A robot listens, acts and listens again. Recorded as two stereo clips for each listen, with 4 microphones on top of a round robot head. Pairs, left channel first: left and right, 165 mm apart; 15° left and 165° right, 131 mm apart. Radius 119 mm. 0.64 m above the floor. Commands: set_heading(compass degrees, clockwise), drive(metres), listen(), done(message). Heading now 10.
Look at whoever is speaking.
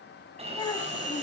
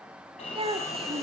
set_heading(220)
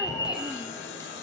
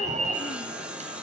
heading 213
listen()
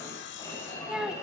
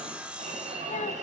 done("Found it: a child speaking, straight ahead.")